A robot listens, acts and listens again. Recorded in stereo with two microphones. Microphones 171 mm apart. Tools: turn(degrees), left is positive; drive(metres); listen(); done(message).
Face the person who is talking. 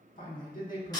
turn(degrees=55)
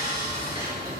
listen()
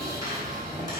listen()
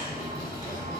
done("I heard a man speaking, but can't make it out now. It was about straight ahead or 70° left.")